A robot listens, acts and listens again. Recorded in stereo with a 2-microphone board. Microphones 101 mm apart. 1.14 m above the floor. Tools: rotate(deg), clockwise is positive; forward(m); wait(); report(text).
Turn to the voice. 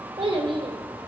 rotate(60)
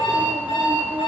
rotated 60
wait()
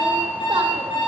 wait()
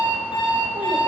report("I heard a child speaking, but can't make it out now. It was about straight ahead or 60° right.")